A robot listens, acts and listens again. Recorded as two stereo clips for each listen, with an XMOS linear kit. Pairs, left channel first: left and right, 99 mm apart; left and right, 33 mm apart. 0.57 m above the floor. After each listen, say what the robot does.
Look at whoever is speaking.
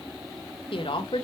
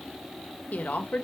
Turn 60° left.
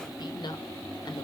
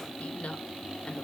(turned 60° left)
Turn 50° left.
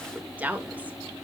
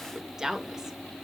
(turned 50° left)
Turn 15° right.
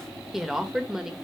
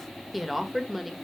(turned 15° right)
Found it: a woman speaking, straight ahead, 1 to 2 m away.